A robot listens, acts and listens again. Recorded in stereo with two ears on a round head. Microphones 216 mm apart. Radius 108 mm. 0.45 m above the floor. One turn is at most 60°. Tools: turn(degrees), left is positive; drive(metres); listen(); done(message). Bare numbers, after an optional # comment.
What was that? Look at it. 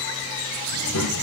# The child speaking: about 65° left or 115° left.
turn(60)
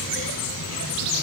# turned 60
# So it is at 45° left.
turn(45)
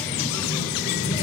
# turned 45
# The child speaking is now 20° left.
turn(20)
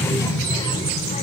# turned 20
# The child speaking is now 25° left.
turn(25)
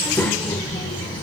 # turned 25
# The child speaking is now 15° left.
turn(15)
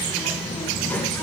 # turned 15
done("Facing the child speaking.")